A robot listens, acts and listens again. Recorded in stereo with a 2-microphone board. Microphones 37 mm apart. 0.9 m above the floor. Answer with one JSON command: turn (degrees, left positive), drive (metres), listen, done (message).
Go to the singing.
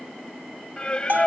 {"turn": 30}
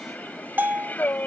{"turn": 120}
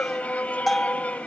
{"turn": 40}
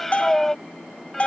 {"turn": 10}
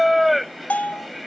{"drive": 1.0}
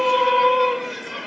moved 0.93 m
{"drive": 1.0}
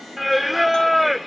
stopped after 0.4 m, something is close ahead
{"done": "Arrived at the singing, straight ahead."}